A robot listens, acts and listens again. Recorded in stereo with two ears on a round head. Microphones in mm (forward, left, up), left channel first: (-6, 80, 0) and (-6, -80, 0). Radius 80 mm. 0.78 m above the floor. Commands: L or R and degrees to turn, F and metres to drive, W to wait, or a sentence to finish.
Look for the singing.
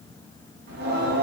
R65
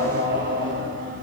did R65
R50
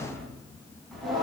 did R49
Found it: singing, straight ahead.